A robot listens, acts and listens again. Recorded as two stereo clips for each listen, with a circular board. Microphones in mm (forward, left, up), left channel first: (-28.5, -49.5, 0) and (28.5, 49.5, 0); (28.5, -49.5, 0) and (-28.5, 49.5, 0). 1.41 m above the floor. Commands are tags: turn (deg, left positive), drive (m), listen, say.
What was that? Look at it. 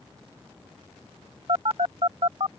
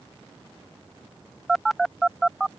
<turn deg="30"/>
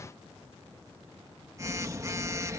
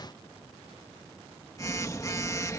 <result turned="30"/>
<say>Found it: a phone buzzing, straight ahead.</say>